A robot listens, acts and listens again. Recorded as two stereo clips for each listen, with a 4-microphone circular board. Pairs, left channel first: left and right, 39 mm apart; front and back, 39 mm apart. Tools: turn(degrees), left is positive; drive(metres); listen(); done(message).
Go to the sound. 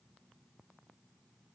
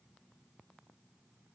listen()
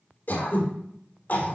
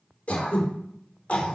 turn(degrees=55)
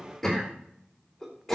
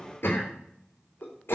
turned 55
turn(degrees=10)
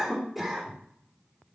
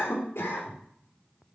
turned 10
drive(metres=1.0)
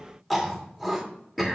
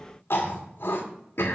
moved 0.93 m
drive(metres=1.0)
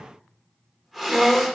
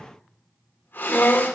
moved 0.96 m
drive(metres=1.0)
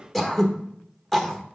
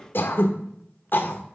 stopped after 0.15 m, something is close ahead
done("Arrived at the throat clearing, straight ahead.")